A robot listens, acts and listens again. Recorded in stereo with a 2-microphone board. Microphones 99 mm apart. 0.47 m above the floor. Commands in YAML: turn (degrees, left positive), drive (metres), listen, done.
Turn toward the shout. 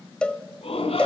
turn: 90
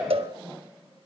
done: "Found it: a shout, straight ahead, over 4 m away."